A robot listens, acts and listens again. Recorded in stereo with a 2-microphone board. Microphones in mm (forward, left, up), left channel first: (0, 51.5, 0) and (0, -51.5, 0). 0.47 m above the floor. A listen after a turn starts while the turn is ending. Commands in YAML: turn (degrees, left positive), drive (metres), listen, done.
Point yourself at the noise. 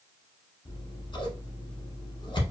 turn: 50
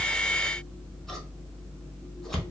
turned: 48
done: "Facing the scissors."